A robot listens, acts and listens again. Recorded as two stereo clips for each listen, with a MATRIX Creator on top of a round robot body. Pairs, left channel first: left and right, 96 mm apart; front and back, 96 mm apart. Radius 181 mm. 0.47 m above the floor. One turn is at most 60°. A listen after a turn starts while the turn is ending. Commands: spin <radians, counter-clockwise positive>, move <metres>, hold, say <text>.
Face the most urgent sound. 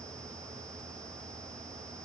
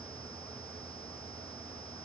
hold
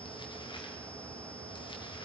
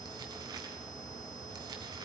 hold
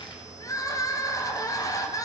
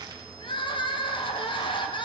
spin 0.61
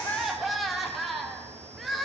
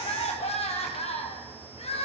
say Facing the crying.